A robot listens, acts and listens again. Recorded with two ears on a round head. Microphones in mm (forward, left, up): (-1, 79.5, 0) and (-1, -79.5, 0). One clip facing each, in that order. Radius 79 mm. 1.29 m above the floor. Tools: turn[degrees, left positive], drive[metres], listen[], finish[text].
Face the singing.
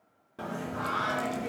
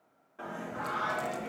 Thought: The singing: about 50° left or 130° left.
Action: turn[50]
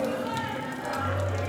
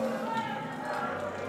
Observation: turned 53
Thought: So it is at 70° left.
Action: turn[70]
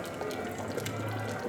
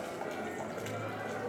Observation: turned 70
Action: finish[Facing the singing.]